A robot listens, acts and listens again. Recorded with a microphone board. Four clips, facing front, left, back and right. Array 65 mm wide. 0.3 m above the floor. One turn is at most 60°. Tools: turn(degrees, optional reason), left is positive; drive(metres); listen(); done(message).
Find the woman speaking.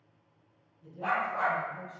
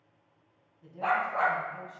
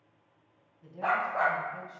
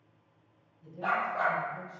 turn(degrees=60, reason="The woman speaking: 130° left.")
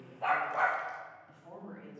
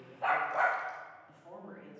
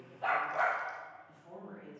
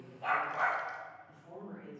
turn(degrees=30, reason="The woman speaking is now 30° left.")
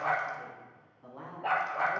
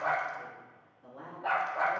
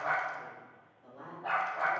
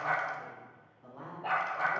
turn(degrees=-20, reason="The woman speaking is now 20° right.")
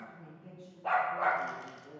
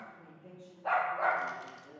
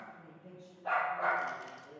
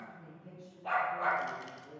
turn(degrees=-15, reason="The woman speaking is now 15° right.")
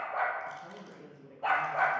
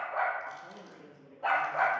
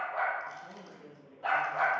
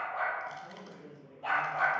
done("Facing the woman speaking, 2 to 4 m away.")